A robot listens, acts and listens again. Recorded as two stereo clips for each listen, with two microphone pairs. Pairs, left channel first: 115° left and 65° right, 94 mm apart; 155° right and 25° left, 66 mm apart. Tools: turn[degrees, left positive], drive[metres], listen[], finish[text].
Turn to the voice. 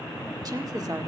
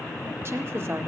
Thought: The woman speaking: 25° right.
Action: turn[-25]
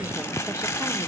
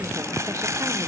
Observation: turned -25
Action: listen[]
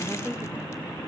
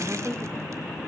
Action: finish[Facing the woman speaking.]